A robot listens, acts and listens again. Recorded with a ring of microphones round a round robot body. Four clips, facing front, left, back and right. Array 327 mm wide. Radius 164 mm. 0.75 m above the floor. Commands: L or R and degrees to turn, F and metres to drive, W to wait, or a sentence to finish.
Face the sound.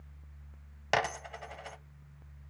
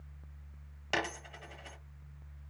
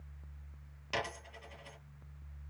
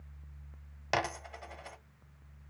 R20
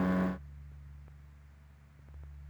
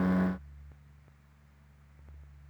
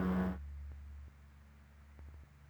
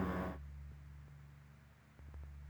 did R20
I heard a dropped coin from this way, but can't make it out now.